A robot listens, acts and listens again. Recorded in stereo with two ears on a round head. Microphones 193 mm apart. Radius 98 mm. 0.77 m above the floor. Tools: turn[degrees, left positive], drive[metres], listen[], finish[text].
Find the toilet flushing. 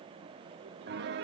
Action: listen[]
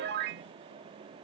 Action: listen[]
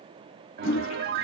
Thought: The toilet flushing: about 65° left or 115° left.
Action: turn[65]
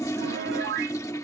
Thought: So it is at 15° left.
Action: turn[15]
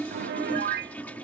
Thought: The toilet flushing is now 10° left.
Action: turn[10]
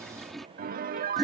Action: finish[Found it: a toilet flushing, straight ahead.]